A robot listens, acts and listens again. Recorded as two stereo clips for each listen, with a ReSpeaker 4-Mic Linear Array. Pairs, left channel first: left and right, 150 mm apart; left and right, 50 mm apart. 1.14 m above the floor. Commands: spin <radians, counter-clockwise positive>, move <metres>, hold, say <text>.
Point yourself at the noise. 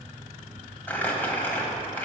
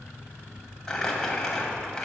spin 0.52
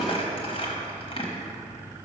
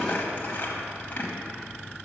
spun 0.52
spin 2.44
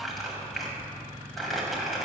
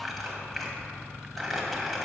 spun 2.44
say Facing the crumpling, 1 to 2 m away.